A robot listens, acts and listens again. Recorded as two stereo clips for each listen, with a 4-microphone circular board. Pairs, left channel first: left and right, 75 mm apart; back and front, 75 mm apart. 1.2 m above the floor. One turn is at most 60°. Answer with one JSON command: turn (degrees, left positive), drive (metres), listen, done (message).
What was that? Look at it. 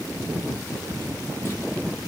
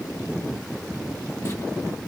{"listen": true}
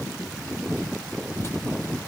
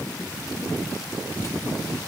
{"listen": true}
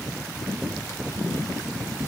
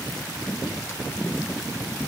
{"done": "I can't make out anything to turn to."}